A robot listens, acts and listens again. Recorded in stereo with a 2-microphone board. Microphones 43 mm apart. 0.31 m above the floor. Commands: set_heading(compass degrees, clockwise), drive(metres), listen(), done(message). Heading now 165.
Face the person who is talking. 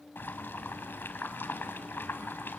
listen()
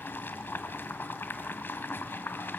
listen()
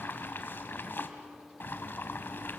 done("I can't make out anyone speaking, only boiling.")